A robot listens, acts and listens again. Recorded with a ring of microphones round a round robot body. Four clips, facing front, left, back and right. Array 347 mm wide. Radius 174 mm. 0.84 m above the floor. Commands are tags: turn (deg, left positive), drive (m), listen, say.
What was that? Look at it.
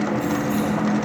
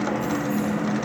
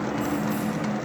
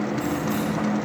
<turn deg="-50"/>
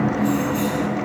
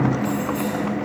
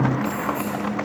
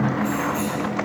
<say>Found it: keys jangling, straight ahead, over 4 m away.</say>